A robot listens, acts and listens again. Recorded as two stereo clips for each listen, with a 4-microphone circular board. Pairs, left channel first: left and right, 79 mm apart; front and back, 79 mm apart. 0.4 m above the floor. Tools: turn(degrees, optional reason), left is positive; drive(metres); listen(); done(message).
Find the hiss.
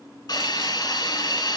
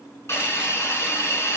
turn(degrees=55, reason="The hiss: 55° left.")
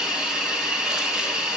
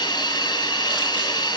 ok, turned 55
turn(degrees=-15, reason="The hiss is now 15° right.")
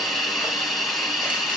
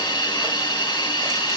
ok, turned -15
done("Found it: a hiss, straight ahead.")